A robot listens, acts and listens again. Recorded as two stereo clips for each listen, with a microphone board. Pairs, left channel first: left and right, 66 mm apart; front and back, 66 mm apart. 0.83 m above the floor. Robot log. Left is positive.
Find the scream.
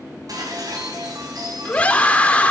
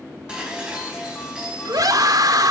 note: The scream: 160° left.
cmd yaw +160
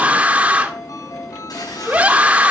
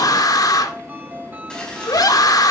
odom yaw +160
note: The scream is now 20° right.
cmd yaw -20
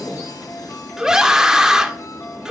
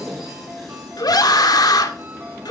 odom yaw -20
note: The scream is now 10° right.
cmd yaw -10
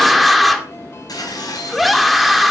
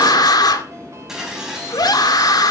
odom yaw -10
end: Facing the scream, 1 to 2 m away.